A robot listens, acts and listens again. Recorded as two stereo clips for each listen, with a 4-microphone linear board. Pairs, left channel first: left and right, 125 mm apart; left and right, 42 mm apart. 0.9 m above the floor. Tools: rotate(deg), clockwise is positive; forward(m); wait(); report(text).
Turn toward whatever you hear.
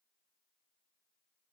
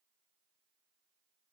wait()
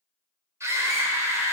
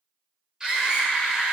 rotate(20)
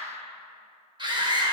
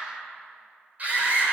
rotate(140)
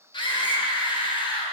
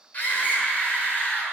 rotate(-40)
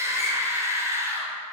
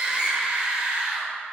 rotate(25)
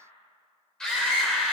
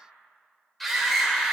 report("Found it: a scream, straight ahead, over 4 m away.")